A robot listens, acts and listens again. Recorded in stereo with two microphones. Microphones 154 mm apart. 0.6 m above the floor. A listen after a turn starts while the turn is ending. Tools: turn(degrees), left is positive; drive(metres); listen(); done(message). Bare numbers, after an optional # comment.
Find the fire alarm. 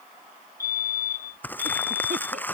# The fire alarm: about 70° left or 110° left.
turn(70)
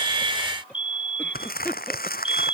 # So it is at 35° left.
turn(35)
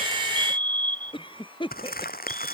# The fire alarm is now 10° left.
turn(10)
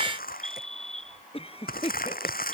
done("Found it: a fire alarm, straight ahead.")